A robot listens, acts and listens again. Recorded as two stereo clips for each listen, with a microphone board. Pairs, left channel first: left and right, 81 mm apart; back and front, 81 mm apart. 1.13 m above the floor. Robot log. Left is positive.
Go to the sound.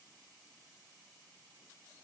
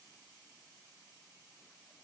cmd idle
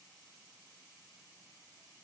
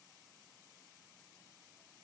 cmd idle
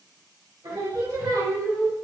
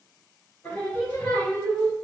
note: The singing: 110° right.
cmd yaw -110
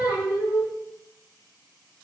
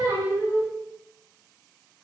note: The singing is now 15° right.
cmd yaw -15
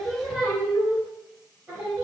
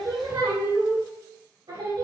cmd fwd 1.0
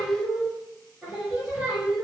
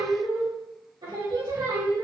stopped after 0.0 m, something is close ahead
end: Something is in my way. I am facing the singing but have not reached it.